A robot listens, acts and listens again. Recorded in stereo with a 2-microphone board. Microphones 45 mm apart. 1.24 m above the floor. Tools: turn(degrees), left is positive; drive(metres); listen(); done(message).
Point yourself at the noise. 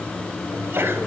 turn(degrees=-55)
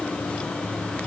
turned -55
listen()
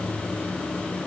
done("I heard a sneeze, but can't make it out now. It was about straight ahead or 70° right.")